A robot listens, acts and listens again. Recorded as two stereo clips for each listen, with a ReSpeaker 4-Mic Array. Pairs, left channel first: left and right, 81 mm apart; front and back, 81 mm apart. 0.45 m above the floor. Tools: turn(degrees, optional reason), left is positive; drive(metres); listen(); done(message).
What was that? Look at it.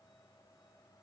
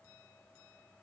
listen()
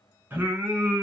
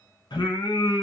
turn(degrees=-20, reason="The singing: 20° right.")
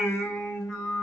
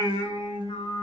turn(degrees=10, reason="The singing is now 10° left.")
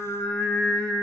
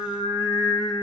turn(degrees=15, reason="The singing is now 15° left.")
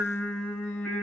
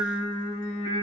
turn(degrees=20, reason="The singing is now 20° left.")
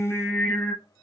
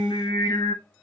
turn(degrees=20, reason="The singing is now 20° left.")
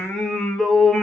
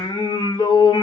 turn(degrees=10, reason="The singing is now 10° left.")
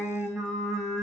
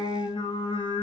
done("Facing the singing, 1 to 2 m away.")